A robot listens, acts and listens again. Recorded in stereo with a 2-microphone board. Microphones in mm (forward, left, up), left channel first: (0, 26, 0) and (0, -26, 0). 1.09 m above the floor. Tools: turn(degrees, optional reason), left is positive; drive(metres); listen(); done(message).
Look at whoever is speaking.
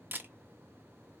listen()
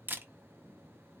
listen()
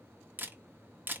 done("I can't make out anyone speaking to turn to.")